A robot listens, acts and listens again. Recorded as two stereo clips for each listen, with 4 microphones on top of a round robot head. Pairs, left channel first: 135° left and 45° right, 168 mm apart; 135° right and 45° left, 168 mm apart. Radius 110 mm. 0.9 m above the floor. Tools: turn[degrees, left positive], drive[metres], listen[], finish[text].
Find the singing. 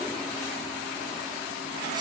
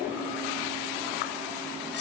Action: listen[]
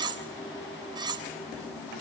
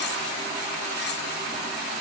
Action: listen[]
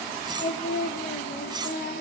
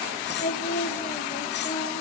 Thought: The singing: 170° left.
Action: turn[170]
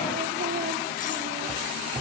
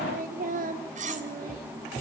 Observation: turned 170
Action: finish[Facing the singing, 2 to 4 m away.]